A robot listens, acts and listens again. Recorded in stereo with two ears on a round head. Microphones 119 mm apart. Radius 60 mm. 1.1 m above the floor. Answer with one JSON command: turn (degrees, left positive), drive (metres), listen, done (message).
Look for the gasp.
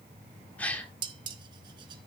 {"turn": 30}
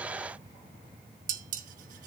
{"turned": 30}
{"listen": true}
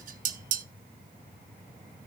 {"done": "I heard a gasp, but can't make it out now. It was about 20° right or 140° left."}